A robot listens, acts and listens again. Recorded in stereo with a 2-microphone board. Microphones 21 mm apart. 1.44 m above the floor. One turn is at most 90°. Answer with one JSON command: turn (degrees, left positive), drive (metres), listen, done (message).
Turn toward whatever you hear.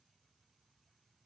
{"listen": true}
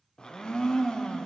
{"turn": 40}
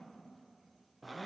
{"done": "Found it: a blender, straight ahead."}